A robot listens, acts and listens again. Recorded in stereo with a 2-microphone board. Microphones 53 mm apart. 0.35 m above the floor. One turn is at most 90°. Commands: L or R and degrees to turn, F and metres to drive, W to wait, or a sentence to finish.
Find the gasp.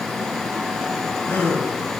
L35
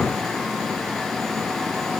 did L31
W
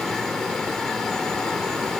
I heard a gasp, but can't make it out now. It was about straight ahead or 115° left.